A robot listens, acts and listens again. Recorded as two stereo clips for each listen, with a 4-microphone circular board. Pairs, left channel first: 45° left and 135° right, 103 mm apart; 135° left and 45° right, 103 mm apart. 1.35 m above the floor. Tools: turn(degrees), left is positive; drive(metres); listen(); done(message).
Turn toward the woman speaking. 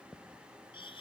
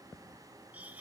listen()
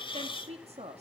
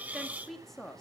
turn(degrees=-140)
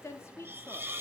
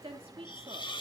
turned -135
turn(degrees=-20)
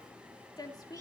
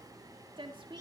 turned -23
done("Found it: a woman speaking, straight ahead.")